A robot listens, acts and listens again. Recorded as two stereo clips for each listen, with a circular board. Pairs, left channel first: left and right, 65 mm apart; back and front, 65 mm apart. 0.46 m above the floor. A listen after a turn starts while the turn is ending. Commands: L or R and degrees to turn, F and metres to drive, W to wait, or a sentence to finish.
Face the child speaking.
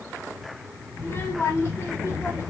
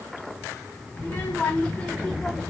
L95
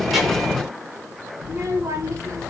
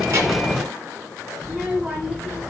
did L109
R70
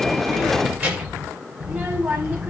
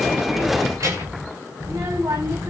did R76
R10
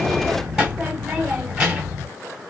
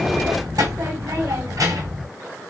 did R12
Found it: a child speaking, straight ahead, 2 to 4 m away.